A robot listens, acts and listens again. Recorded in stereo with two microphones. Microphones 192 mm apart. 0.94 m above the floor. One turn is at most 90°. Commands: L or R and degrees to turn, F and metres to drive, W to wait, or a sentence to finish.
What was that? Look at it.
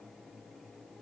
W
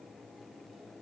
W
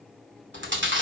R90
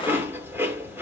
R10
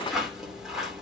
Found it: chewing, straight ahead, 2 to 4 m away.